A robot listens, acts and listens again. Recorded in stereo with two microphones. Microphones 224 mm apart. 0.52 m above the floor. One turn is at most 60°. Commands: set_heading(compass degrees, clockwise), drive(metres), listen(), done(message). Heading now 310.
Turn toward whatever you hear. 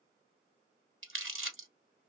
set_heading(10)
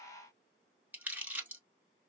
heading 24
done("Facing the crumpling, 1 to 2 m away.")